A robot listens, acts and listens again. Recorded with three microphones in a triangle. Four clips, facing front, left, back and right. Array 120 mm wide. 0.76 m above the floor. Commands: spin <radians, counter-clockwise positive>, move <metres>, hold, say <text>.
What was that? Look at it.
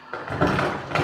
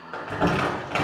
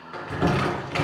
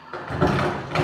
spin 0.17
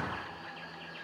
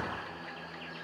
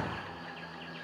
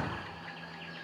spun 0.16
hold
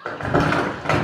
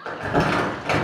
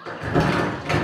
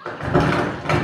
say Found it: crumpling, straight ahead.